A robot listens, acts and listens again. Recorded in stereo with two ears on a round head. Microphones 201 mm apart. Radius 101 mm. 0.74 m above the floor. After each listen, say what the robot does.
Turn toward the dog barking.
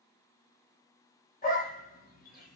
Turn 40° left.
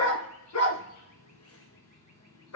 Turn 95° left.
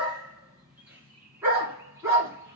Turn 10° right.
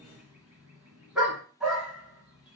Facing the dog barking.